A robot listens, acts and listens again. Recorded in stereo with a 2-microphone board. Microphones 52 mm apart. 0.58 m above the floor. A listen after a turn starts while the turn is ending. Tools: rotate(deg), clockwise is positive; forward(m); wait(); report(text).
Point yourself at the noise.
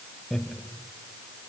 rotate(-30)
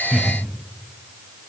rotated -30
wait()
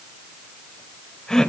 rotate(-30)
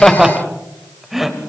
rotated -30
rotate(30)
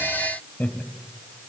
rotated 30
rotate(-30)
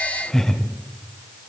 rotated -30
rotate(-10)
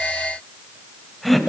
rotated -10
report("Found it: laughter, straight ahead.")